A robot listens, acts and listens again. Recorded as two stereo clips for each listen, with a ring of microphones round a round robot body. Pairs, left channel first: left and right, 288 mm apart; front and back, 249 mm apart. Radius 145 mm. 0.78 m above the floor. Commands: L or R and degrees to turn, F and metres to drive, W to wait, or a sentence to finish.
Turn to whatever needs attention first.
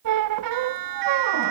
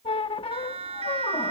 R110
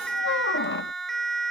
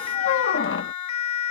Facing the siren.